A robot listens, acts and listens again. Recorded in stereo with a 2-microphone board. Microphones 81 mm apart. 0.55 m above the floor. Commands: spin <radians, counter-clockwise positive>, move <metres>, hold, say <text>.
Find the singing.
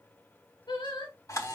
spin 1.31
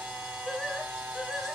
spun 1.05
say Found it: singing, straight ahead, 2 to 4 m away.